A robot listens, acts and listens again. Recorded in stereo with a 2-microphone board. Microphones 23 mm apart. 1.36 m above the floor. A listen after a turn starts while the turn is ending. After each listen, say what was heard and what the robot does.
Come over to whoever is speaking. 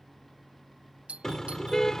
Keep listening.
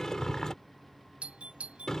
Keep listening.
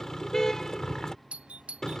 I can't make out anyone speaking, only a car horn and a doorbell.